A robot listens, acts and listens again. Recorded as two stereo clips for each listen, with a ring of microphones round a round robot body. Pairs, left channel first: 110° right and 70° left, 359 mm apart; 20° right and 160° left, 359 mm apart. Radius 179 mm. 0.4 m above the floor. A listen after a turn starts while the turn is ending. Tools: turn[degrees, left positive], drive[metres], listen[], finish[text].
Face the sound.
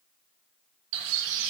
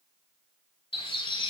Thought: The bird: 55° left.
Action: turn[55]
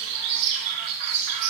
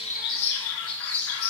Thought: The bird is now 30° left.
Action: turn[30]
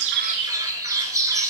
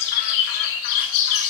Thought: The bird is now 15° right.
Action: turn[-15]
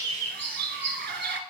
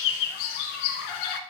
Action: finish[Facing the bird, under 1 m away.]